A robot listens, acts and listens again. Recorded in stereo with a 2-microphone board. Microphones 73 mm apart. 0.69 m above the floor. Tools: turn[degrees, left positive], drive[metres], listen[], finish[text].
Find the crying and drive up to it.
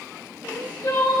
Thought: The crying: about 70° left or 110° left.
Action: turn[70]
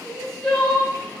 Action: drive[1.0]
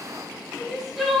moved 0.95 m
Action: drive[1.0]
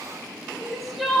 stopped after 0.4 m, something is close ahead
Action: finish[I am next to the crying.]